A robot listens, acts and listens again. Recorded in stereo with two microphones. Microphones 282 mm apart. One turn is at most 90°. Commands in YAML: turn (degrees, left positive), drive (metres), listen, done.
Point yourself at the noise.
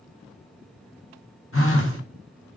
turn: 50
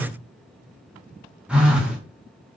done: "Found it: a phone buzzing, straight ahead."